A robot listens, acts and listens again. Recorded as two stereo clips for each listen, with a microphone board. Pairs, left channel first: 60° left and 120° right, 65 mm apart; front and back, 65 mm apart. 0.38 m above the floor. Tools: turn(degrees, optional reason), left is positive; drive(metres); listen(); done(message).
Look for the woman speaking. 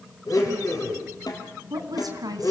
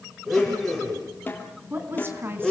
turn(degrees=-130, reason="The woman speaking: 130° right.")
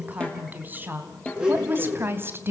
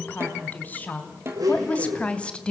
turn(degrees=-70, reason="The woman speaking is now 70° right.")
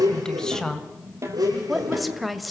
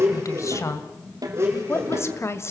turn(degrees=-30, reason="The woman speaking is now 30° right.")
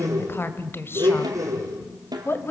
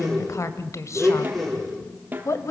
turn(degrees=15, reason="The woman speaking is now 15° left.")
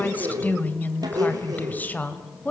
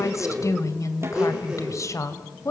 done("Facing the woman speaking, 2 to 4 m away.")